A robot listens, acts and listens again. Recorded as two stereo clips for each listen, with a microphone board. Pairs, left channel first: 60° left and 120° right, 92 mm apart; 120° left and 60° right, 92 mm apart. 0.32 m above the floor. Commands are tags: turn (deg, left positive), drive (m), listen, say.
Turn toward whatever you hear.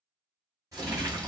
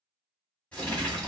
<turn deg="-165"/>
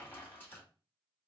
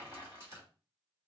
<say>Facing the crumpling.</say>